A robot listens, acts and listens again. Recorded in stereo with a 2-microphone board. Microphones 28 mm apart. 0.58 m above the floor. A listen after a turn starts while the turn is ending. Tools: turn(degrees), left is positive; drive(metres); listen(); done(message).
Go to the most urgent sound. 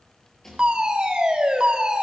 turn(degrees=-30)
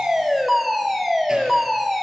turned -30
drive(metres=1.0)
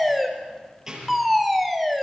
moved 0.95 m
drive(metres=1.0)
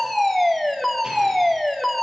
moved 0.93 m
turn(degrees=10)
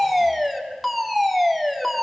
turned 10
drive(metres=1.0)
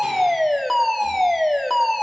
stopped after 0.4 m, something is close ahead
turn(degrees=10)
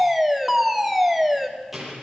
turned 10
done("Arrived at the fire alarm, straight ahead.")